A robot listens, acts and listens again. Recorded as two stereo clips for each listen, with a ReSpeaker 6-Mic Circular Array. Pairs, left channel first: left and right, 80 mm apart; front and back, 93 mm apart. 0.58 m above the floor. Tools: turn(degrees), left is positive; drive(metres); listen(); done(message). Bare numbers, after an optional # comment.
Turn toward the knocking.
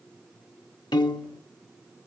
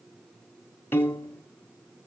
listen()
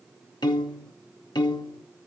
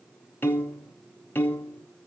listen()
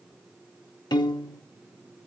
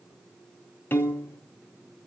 done("I can't make out knocking, only a piano.")